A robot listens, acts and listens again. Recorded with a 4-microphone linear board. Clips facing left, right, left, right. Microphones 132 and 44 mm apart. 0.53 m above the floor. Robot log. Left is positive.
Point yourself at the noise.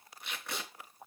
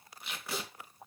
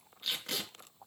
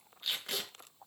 cmd yaw -30
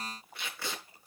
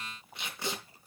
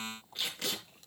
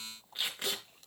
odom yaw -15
note: So it is at 160° right.
cmd yaw -160
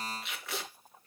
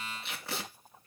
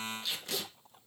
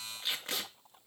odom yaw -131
note: The tape being pulled is now 30° right.
cmd yaw -30
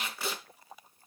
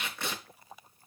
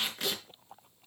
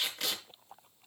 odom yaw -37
end: Found it: tape being pulled, straight ahead.